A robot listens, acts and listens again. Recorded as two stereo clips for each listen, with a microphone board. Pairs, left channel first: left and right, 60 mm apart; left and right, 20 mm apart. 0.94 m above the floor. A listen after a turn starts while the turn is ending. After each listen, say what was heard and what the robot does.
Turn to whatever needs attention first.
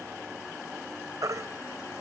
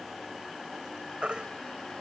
The baby crying: about 60° right or 120° right. Turn 60° right.
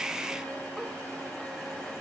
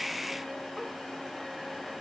Keep listening.
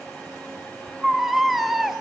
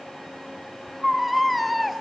Found it: a baby crying, straight ahead, 2 to 4 m away.